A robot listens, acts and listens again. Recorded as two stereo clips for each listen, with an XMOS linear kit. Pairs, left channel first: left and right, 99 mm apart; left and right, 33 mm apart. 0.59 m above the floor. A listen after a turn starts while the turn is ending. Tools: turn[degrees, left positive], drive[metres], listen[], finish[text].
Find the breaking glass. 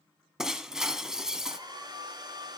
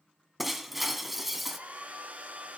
Action: turn[-30]
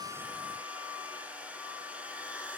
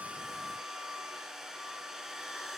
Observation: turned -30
Action: listen[]
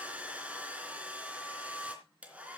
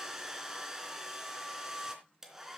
Action: finish[I heard breaking glass, but can't make it out now. It was about 25° left or 145° right.]